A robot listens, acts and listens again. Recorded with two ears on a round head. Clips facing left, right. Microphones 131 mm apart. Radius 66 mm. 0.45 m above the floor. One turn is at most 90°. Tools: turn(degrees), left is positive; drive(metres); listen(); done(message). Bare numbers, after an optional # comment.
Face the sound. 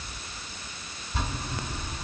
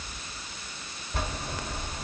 # The bell: about 45° right or 135° right.
turn(-45)
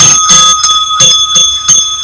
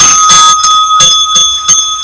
# So it is at 15° right.
turn(-15)
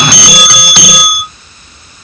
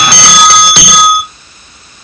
done("Found it: a bell, straight ahead, 1 to 2 m away.")